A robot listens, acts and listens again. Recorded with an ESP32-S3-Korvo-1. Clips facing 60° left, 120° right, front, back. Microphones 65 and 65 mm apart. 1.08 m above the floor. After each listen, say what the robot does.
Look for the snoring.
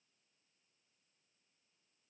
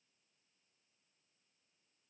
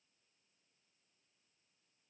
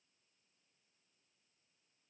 Keep listening.
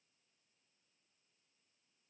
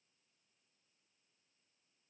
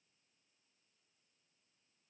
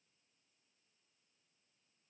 Keep listening.
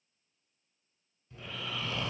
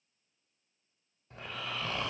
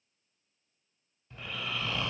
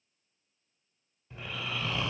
Turn 105° right.
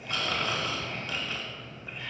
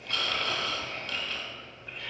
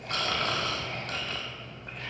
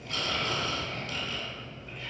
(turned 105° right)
Turn 20° right.
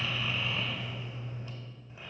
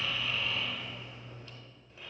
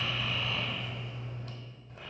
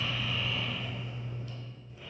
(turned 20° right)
Turn 10° right.
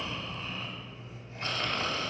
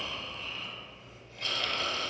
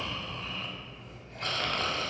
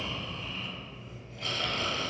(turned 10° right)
Found it: snoring, straight ahead.